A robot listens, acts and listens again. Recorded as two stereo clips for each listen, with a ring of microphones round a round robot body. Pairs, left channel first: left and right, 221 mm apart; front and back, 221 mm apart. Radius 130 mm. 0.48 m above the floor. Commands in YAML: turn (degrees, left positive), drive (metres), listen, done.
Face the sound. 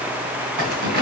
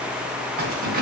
turn: -130
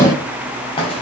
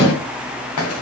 turn: 20
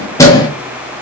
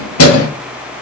turn: 15
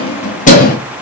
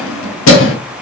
turn: 35
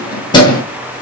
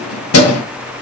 turn: 20
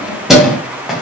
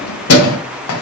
done: "Found it: keys jangling, straight ahead."